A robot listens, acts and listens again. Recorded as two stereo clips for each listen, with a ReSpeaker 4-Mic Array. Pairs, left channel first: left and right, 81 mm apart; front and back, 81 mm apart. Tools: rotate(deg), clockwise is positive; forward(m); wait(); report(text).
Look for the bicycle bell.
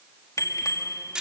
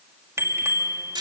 rotate(-130)
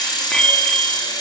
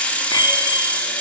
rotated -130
rotate(-10)
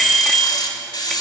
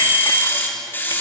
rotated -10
report("Facing the bicycle bell.")